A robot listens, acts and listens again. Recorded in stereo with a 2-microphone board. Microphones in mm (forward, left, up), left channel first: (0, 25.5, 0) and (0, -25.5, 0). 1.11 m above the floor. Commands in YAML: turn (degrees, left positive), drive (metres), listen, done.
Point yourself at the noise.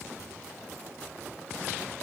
listen: true
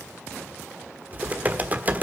turn: -30
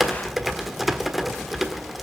done: "Found it: typing on a keyboard, straight ahead, 1 to 2 m away."